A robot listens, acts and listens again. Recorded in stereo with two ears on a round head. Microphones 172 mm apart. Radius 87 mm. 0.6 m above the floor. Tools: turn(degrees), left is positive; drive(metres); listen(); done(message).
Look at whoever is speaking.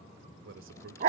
turn(degrees=-70)
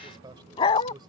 turn(degrees=-25)
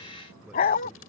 listen()
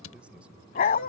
listen()
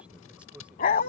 done("Found it: a man speaking, straight ahead.")